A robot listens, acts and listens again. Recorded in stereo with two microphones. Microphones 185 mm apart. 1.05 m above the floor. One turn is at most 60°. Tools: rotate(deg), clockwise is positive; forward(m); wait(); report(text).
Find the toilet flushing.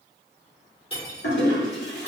rotate(-60)
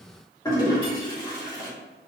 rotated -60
rotate(-20)
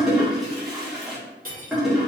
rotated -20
report("Found it: a toilet flushing, straight ahead.")